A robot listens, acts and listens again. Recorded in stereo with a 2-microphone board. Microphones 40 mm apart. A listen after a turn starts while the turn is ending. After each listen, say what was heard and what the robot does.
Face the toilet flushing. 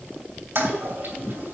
The toilet flushing: about 75° right or 105° right. Turn 75° right.
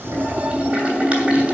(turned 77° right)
So it is at 25° right. Turn 25° right.
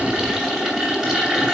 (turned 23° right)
Facing the toilet flushing.